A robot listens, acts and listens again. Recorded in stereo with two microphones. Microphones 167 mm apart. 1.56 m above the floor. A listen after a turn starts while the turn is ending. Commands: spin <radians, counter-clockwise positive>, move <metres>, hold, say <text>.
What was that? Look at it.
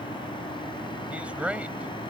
spin -0.52
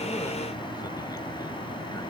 hold
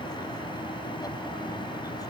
hold
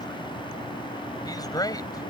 spin 0.44
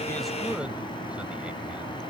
hold
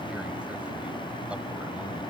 hold
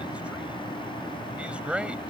say Found it: a man speaking, straight ahead.